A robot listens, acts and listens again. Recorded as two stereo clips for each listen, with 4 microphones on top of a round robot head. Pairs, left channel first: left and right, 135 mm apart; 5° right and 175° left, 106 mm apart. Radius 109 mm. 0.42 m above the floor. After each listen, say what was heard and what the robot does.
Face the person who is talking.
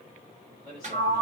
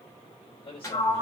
The man speaking: 35° right. Turn 35° right.
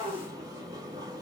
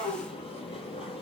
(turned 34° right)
Keep listening.
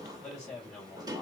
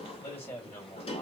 Found it: a man speaking, straight ahead.